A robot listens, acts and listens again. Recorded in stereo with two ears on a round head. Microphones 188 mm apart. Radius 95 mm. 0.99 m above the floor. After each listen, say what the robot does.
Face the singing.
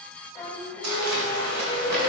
Turn 30° left.
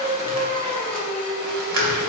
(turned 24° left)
Turn 30° left.
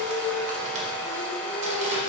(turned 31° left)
Turn 150° left.
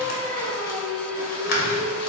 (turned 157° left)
Turn 15° left.
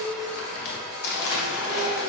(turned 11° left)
Found it: singing, straight ahead.